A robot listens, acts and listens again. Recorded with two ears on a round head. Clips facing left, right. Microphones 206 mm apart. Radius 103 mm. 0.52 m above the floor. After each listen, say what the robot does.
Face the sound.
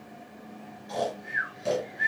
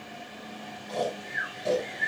Turn 30° left.
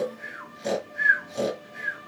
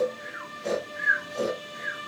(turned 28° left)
Turn 140° left.
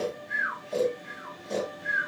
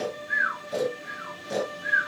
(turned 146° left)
Found it: snoring, straight ahead.